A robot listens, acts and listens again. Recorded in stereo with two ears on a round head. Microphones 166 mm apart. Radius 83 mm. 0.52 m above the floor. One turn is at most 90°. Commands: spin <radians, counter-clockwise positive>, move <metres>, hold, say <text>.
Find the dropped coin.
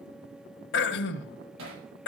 hold
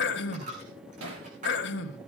spin -0.70
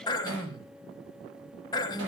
hold
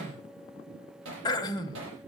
say I heard a dropped coin, but can't make it out now. It was about straight ahead or 100° right.